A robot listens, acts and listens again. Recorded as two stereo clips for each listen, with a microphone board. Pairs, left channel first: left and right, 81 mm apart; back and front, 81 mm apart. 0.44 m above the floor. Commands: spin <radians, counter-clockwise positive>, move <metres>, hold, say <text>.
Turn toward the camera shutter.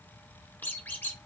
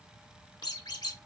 hold
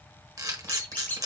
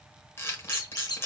spin -2.27
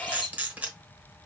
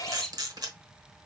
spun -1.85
spin -0.35
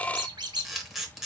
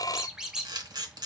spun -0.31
say Found it: a camera shutter, straight ahead.